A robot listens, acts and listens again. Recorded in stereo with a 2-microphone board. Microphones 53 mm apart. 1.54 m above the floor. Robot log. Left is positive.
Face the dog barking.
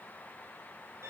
cmd idle
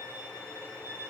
cmd idle
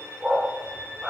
cmd yaw -30
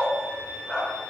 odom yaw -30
note: So it is at 15° left.
cmd yaw +15
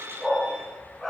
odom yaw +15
end: Facing the dog barking.